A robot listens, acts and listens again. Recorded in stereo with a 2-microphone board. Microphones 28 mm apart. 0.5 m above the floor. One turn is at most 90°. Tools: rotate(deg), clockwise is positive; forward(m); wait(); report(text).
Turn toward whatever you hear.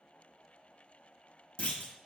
rotate(-55)
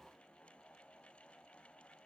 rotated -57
wait()
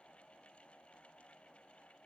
report("I heard a clunk, but can't make it out now. It was about straight ahead or 70° left.")